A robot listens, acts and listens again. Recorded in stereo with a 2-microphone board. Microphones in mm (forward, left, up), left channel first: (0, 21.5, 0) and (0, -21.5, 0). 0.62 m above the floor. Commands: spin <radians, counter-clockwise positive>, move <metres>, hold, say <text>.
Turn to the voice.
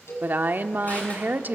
spin -0.79
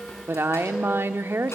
spin -1.40
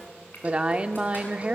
spin -0.52
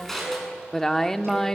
spin 0.17
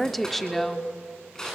say Facing the woman speaking, 1 to 2 m away.